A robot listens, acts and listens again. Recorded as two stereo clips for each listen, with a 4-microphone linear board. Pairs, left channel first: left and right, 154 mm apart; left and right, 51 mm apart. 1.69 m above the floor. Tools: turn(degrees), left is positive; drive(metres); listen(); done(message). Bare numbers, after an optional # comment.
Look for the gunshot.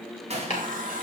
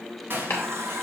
# The gunshot: about 45° right or 135° right.
turn(-45)
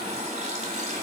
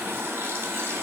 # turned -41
listen()
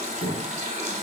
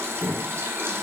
done("I heard a gunshot, but can't make it out now. It was about 5° right or 95° right.")